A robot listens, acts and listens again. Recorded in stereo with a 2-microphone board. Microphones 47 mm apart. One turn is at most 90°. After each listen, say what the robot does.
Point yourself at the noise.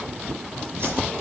Turn 60° right.
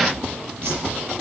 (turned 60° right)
Turn 60° right.
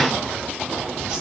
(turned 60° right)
Turn 15° right.
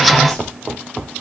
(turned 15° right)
Keep listening.
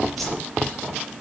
Facing the whoosh, over 4 m away.